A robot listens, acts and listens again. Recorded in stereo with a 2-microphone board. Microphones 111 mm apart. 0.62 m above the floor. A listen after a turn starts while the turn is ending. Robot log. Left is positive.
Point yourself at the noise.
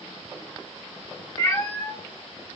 note: The cat meowing: about 25° left or 155° left.
cmd yaw +25
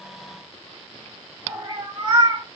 note: So it is at 50° right.
cmd yaw -50
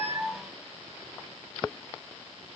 cmd idle
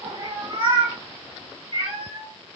note: The cat meowing is now 45° right.
cmd yaw -45
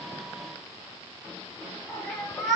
end: Found it: a cat meowing, straight ahead.